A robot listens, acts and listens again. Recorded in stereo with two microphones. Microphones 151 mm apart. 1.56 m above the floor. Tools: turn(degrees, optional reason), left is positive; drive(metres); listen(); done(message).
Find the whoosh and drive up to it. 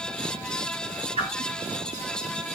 turn(degrees=-40, reason="The whoosh: about 40° right or 140° right.")
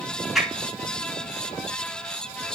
drive(metres=1.0)
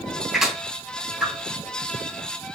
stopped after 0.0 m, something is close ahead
done("Blocked. The whoosh is further on, straight ahead.")